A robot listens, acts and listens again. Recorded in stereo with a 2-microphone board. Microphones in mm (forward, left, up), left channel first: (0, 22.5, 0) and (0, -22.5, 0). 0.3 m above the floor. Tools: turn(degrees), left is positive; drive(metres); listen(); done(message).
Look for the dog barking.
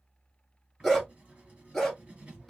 turn(degrees=30)
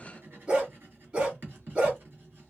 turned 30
turn(degrees=-30)
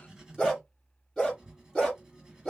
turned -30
turn(degrees=15)
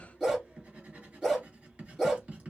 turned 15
done("Found it: a dog barking, straight ahead.")